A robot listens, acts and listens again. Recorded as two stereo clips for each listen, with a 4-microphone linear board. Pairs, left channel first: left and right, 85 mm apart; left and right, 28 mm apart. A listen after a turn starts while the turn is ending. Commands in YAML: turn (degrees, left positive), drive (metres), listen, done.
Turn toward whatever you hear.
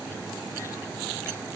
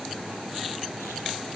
listen: true
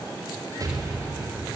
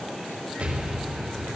turn: -45
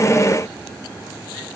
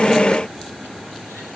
listen: true
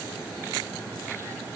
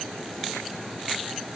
done: "I heard an explosion, but can't make it out now. It was about straight ahead or 90° right."